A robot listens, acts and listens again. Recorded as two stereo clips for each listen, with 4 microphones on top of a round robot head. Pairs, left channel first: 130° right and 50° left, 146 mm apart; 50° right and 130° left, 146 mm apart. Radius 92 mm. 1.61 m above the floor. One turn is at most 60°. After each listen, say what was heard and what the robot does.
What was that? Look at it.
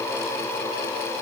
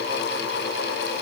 Keep listening.
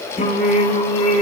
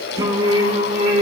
The singing: 175° right. Turn 60° right.
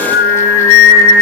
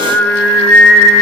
The singing is now 140° right. Turn 60° right.
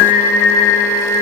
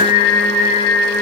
The singing is now 115° right. Turn 60° right.
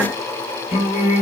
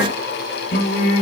The singing is now 80° right. Turn 60° right.
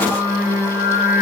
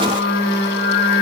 The singing is now 25° right. Turn 25° right.
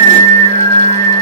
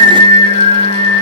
Facing the singing.